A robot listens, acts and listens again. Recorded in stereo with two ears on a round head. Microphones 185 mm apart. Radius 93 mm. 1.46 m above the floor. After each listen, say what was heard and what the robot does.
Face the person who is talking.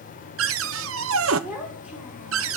Turn 30° right.
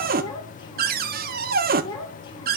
So it is at 25° left. Turn 25° left.
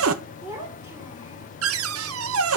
The child speaking is now 15° right. Turn 15° right.
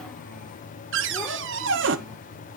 Keep listening.
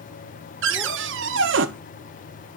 Keep listening.
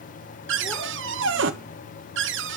Facing where the child speaking came from. I can't hear it now.